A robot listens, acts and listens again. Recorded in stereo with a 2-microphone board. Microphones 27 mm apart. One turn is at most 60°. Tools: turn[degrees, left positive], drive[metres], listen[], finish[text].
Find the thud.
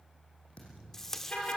Thought: The thud: about 50° left or 130° left.
Action: turn[50]
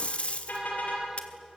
Action: listen[]
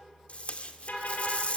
Action: finish[I heard a thud, but can't make it out now. It was about straight ahead or 80° left.]